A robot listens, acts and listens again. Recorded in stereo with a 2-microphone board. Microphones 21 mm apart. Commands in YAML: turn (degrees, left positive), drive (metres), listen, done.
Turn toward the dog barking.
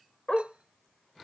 turn: 35
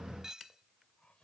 listen: true
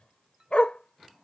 turn: 105
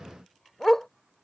turn: 20
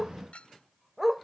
done: "Facing the dog barking."